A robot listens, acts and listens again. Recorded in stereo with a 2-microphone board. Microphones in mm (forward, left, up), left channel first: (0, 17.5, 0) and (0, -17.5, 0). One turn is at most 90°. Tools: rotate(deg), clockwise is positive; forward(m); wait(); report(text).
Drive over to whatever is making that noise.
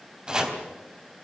rotate(20)
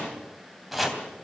forward(1.0)
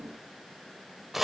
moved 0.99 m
forward(1.0)
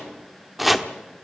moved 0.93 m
forward(1.0)
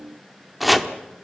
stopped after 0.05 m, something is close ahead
report("I am next to the chopping.")